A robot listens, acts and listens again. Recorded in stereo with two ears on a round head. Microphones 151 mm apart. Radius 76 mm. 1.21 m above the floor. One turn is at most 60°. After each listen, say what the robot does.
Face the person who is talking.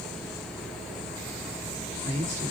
Turn 40° right.
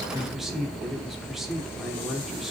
Found it: a man speaking, straight ahead.